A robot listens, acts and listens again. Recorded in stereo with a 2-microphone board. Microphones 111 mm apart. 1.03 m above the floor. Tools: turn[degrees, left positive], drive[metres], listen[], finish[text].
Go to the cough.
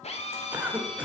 Thought: The cough: about 15° right or 165° right.
Action: turn[-15]
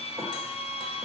Action: listen[]
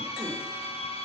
Action: listen[]
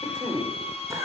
Thought: So it is at 150° right.
Action: turn[-150]
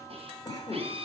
Thought: The cough is now 35° left.
Action: turn[35]
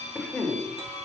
Action: drive[1.0]
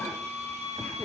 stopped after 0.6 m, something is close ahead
Action: listen[]
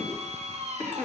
Thought: The cough is now 10° left.
Action: turn[10]
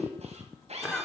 Action: finish[Blocked. The cough is further on, straight ahead.]